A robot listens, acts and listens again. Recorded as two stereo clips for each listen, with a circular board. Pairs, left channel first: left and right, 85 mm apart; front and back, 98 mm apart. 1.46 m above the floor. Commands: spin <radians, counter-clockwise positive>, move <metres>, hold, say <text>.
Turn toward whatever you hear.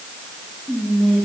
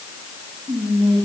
spin 3.14
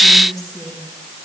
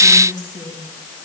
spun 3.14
spin 0.79
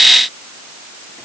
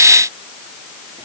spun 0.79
hold
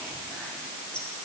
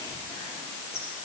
spin 0.17
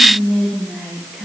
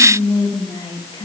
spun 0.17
say Found it: whispering, straight ahead.